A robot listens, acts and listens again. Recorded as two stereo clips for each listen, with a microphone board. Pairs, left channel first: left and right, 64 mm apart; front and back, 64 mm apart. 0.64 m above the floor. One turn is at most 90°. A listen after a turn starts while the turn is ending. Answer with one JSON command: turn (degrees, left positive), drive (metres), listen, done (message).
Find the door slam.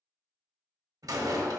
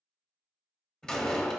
{"turn": -75}
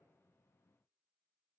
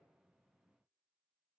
{"done": "Facing where the door slam came from. I can't hear it now."}